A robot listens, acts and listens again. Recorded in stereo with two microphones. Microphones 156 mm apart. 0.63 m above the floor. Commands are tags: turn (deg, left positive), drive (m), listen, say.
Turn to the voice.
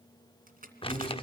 <turn deg="35"/>
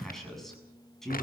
<say>Facing the man speaking, over 4 m away.</say>